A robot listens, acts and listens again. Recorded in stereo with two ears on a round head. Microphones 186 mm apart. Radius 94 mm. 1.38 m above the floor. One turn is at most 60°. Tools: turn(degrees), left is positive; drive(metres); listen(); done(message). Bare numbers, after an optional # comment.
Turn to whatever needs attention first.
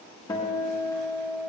listen()
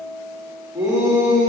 # The shout: about 20° right or 160° right.
turn(-20)
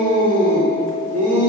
# So it is at 140° right.
turn(-60)
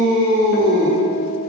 # The shout is now 105° right.
turn(-60)
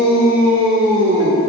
# The shout is now 65° right.
turn(-60)
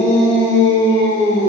# The shout is now 30° right.
turn(-30)
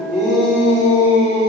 done("Found it: a shout, straight ahead, 2 to 4 m away.")